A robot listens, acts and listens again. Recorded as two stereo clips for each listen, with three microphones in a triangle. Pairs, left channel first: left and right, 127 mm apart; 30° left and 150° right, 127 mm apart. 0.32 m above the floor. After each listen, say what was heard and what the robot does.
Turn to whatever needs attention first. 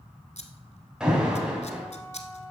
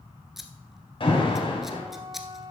The alarm: 10° right. Turn 10° right.
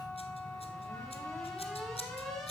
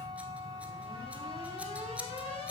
Facing the alarm, 2 to 4 m away.